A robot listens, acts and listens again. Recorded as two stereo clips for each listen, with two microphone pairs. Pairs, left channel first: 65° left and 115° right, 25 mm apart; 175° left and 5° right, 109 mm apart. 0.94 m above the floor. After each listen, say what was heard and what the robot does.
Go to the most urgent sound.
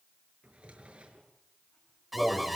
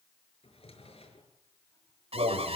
The alarm: 30° right. Turn 30° right.
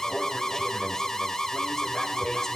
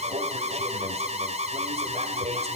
Drive 1.0 m forward.
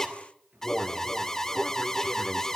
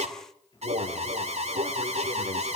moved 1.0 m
The alarm is now 10° right. Turn 10° right.
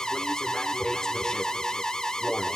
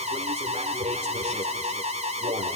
Drive 1.0 m forward.
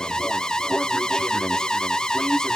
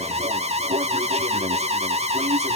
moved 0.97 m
Drive 1.0 m forward.
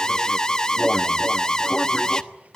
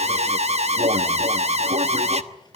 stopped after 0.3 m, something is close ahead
Arrived at the alarm, straight ahead.